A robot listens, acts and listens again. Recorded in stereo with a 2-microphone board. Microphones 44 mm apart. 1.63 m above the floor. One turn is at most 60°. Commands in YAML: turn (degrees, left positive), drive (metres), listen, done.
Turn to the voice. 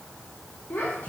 turn: 40
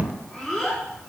done: "Found it: a child speaking, straight ahead, 2 to 4 m away."